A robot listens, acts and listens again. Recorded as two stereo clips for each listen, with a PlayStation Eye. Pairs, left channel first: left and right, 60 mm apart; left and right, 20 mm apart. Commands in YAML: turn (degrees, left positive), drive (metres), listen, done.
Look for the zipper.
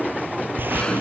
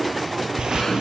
turn: -35
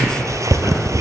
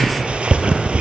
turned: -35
turn: -110
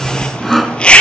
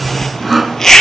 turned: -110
turn: 20
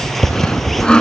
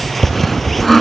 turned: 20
done: "Facing the zipper."